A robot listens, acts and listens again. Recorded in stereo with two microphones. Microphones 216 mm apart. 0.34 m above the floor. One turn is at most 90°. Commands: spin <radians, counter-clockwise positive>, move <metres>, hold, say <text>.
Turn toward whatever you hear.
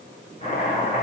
spin 0.52
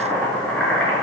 say Facing the chopping, over 4 m away.